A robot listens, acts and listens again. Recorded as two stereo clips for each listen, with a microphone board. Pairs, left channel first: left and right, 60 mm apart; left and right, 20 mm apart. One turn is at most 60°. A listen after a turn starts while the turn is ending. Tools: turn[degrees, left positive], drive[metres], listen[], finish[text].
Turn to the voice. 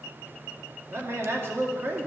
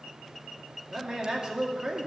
Thought: The man speaking: about 45° right or 135° right.
Action: turn[-45]
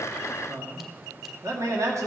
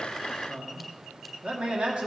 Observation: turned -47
Thought: So it is at 80° right.
Action: turn[-60]
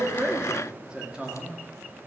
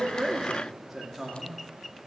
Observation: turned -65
Thought: The man speaking is now 15° right.
Action: turn[-15]
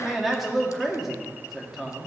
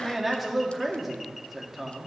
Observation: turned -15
Action: finish[Found it: a man speaking, straight ahead, 2 to 4 m away.]